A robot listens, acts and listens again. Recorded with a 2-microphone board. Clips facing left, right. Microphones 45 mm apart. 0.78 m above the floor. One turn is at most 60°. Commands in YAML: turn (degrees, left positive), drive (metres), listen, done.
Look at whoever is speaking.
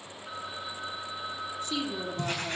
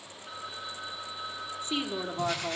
turn: -30
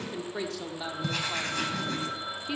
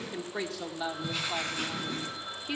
done: "Found it: a woman speaking, straight ahead."